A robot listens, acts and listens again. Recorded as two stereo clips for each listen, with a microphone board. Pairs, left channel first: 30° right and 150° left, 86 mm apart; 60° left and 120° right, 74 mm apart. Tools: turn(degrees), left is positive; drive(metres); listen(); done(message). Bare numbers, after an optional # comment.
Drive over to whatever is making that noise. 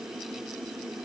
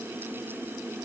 listen()
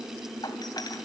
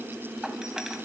# The doorbell: 40° right.
turn(-40)
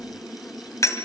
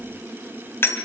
# The doorbell is now 10° left.
turn(10)
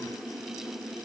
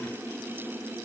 listen()
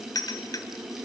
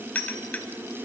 drive(1.0)
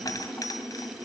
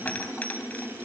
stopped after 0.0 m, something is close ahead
done("Something is in my way. I am facing the doorbell but have not reached it.")